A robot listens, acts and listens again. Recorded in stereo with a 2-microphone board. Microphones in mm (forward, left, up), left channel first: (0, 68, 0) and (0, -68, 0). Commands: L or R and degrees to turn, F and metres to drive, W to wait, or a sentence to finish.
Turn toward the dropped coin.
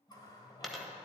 L30
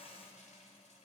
W
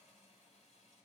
I heard a dropped coin, but can't make it out now. It was about 30° right or 150° left.